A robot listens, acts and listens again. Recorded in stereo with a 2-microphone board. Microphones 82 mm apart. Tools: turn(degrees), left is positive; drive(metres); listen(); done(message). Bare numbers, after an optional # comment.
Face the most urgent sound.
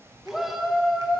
turn(30)
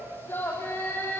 # So it is at 150° left.
turn(150)
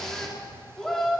done("Facing the shout.")